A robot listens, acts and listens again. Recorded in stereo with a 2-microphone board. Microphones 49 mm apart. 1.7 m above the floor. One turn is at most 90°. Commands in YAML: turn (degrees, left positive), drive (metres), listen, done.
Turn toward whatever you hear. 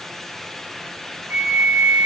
turn: -55
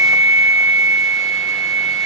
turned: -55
turn: -75
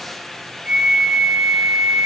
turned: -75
turn: -15
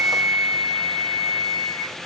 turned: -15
done: "Found it: a flute, straight ahead, under 1 m away."